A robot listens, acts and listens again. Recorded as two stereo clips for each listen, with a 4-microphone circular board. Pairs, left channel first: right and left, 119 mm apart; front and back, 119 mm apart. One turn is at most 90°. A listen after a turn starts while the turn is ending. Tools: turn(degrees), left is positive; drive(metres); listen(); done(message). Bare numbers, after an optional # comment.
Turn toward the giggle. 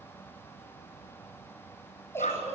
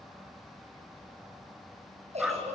# The giggle: 160° right.
turn(-90)
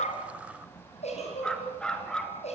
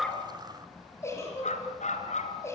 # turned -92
# The giggle is now 65° right.
turn(-65)
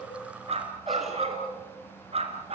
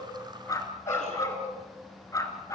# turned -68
listen()
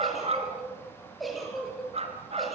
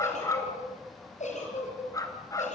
done("Facing the giggle.")